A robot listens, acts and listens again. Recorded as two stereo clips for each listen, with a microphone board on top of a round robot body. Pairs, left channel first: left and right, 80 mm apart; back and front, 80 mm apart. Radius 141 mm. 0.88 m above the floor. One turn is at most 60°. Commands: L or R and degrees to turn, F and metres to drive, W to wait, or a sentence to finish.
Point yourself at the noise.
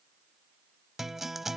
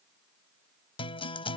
L60
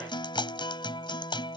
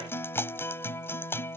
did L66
L60
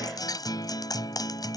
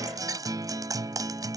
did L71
L45
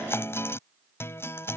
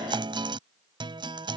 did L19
L25
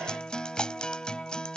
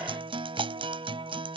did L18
L10
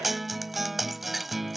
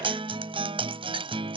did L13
Facing the guitar.